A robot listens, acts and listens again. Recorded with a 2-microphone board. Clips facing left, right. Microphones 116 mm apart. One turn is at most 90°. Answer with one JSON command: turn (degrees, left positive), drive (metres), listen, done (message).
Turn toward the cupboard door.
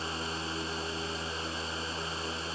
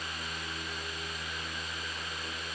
{"listen": true}
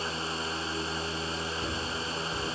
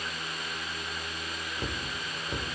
{"turn": -75}
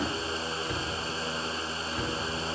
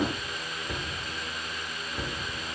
{"done": "Found it: a cupboard door, straight ahead, under 1 m away."}